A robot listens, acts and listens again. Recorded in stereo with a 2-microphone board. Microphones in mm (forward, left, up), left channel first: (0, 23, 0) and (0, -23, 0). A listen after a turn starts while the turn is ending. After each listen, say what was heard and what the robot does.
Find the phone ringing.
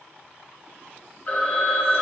The phone ringing: about 40° left or 140° left. Turn 40° left.
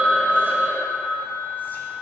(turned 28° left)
So it is at 105° left. Turn 105° left.
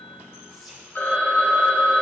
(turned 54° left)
The phone ringing is now 50° left. Turn 50° left.
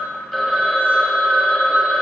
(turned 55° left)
Found it: a phone ringing, straight ahead, 1 to 2 m away.